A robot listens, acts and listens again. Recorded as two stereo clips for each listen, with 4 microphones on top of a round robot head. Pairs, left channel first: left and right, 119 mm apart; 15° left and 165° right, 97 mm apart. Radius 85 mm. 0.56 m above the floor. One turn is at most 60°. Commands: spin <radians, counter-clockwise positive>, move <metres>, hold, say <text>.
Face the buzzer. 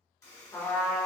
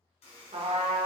spin 0.44
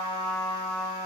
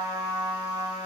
hold
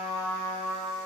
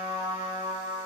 hold
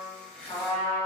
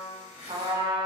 spin 0.17
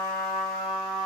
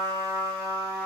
hold
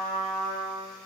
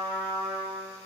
hold
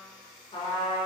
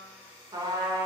say Found it: a buzzer, straight ahead, 1 to 2 m away.